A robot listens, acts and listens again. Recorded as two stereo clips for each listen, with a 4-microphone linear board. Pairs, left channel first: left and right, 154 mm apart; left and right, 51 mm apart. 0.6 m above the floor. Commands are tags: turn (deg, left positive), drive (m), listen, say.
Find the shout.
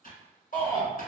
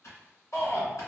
<turn deg="60"/>
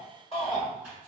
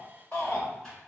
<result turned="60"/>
<turn deg="45"/>
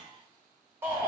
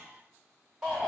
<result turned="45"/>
<turn deg="-15"/>
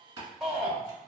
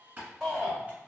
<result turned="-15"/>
<say>Found it: a shout, straight ahead, 1 to 2 m away.</say>